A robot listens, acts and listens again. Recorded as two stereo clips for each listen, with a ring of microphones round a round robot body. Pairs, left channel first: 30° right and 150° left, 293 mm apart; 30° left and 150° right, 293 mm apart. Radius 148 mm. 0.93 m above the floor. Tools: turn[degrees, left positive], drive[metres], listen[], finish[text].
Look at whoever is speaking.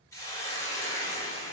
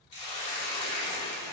Action: listen[]
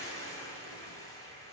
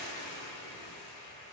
Action: listen[]
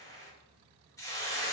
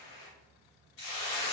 Action: finish[I can't make out anyone speaking to turn to.]